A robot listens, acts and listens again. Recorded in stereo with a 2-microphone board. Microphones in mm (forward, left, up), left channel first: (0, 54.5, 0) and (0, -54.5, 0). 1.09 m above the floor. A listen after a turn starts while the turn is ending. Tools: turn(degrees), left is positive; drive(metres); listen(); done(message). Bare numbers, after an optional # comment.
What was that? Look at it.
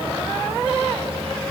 listen()
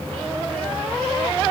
listen()
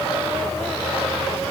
done("I can't make out anything to turn to.")